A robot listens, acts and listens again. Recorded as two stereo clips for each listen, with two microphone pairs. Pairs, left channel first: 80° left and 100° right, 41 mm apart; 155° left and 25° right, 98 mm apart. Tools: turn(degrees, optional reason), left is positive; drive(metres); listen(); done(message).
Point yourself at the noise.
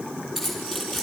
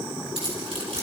turn(degrees=-10, reason="The keys jangling: 10° right.")
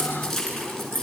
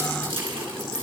done("Found it: keys jangling, straight ahead, over 4 m away.")